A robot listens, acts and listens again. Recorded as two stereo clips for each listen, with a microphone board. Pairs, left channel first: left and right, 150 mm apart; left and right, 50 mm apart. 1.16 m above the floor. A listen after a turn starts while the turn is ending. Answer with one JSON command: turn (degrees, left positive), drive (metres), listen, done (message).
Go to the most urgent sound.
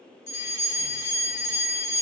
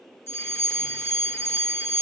{"turn": 60}
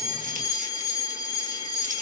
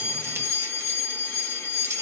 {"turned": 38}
{"turn": 30}
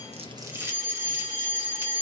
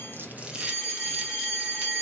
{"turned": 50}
{"turn": -20}
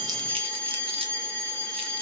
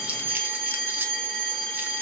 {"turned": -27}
{"drive": 1.0}
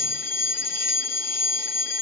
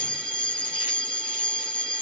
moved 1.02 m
{"turn": 20}
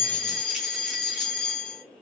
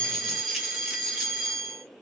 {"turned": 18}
{"drive": 1.0}
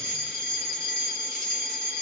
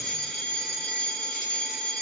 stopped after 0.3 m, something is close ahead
{"done": "I am next to the fire alarm."}